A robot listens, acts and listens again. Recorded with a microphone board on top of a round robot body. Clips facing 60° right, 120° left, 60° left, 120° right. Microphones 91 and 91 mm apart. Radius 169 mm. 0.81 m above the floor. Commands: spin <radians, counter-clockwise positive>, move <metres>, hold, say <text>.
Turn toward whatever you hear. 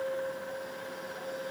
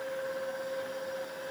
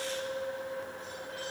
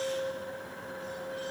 hold
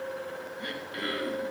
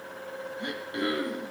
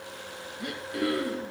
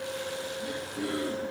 spin 0.96
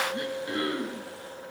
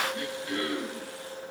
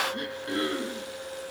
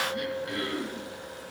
say Facing the throat clearing, 2 to 4 m away.